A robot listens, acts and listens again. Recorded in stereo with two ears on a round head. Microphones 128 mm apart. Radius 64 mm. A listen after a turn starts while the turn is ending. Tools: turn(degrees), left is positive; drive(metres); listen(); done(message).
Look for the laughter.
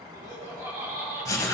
turn(degrees=-20)
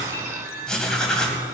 listen()
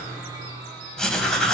listen()
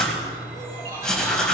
turn(degrees=-25)
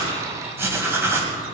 listen()
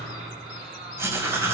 turn(degrees=-135)
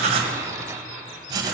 listen()
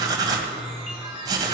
listen()
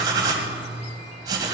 done("Facing where the laughter came from. I can't hear it now.")